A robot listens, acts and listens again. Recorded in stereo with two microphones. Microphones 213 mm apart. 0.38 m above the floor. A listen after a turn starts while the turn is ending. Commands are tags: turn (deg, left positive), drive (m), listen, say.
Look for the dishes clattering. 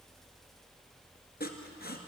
<listen/>
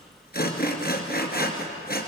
<listen/>
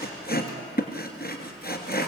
<say>I can't make out dishes clattering to turn to.</say>